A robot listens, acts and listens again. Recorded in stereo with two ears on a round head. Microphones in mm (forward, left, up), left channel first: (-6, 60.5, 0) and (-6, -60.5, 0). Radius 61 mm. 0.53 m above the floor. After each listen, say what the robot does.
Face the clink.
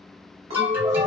Turn 50° right.
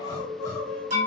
Turn 75° right.
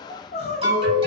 Keep listening.
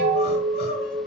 Facing the clink.